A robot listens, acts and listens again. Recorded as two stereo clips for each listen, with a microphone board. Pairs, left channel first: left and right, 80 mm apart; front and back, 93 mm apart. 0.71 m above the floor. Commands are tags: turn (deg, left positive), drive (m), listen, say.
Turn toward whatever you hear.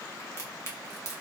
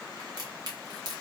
<turn deg="140"/>
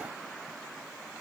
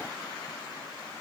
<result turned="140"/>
<say>I heard a crack from this way, but can't make it out now.</say>